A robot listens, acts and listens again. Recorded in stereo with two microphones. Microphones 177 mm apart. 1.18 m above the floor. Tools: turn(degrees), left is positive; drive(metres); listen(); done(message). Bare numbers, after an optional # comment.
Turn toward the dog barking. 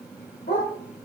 # The dog barking: about 55° left or 125° left.
turn(55)
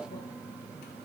listen()
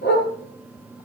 # So it is at 70° left.
turn(70)
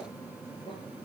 listen()
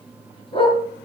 # The dog barking is now 30° left.
turn(30)
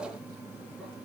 listen()
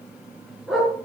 done("Facing the dog barking, over 4 m away.")